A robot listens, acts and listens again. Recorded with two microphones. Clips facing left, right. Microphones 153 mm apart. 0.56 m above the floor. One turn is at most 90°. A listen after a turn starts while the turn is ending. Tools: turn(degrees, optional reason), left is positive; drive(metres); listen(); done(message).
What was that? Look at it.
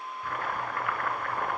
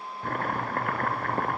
turn(degrees=-50, reason="The chopping: about 50° right or 130° right.")
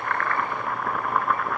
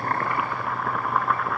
done("Facing the chopping, 1 to 2 m away.")